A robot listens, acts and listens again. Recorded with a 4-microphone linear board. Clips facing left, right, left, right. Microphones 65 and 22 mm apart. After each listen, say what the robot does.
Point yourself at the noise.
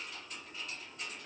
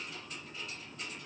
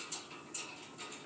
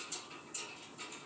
Keep listening.
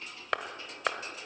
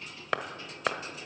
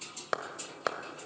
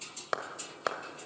Turn 30° left.
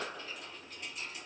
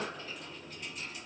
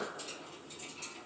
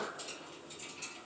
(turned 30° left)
Keep listening.
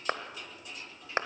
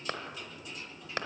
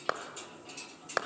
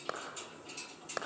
Turn 150° left.
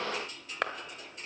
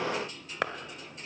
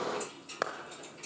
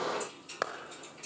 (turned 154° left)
Found it: a clap, straight ahead.